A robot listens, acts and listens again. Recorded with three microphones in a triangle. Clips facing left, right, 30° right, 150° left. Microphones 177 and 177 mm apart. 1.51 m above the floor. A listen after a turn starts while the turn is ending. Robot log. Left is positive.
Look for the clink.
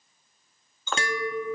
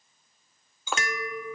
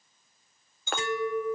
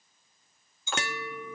note: The clink: 10° right.
cmd yaw -10
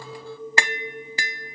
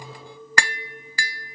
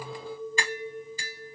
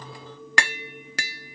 end: Found it: a clink, straight ahead, 1 to 2 m away.